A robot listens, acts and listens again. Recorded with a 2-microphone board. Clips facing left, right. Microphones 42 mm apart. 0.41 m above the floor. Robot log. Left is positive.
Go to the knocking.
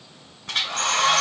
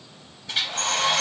cmd idle
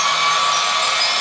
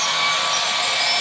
cmd idle
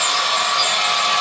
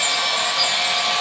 end: I can't make out knocking, only a hair dryer.